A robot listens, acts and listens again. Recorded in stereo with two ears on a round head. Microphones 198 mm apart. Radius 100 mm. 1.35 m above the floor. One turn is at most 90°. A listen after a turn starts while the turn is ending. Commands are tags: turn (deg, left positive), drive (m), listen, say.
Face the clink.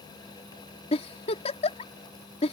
<listen/>
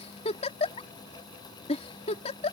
<listen/>
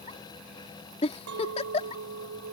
<turn deg="-70"/>
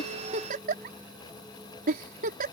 <listen/>
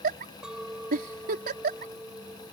<say>Found it: a clink, straight ahead.</say>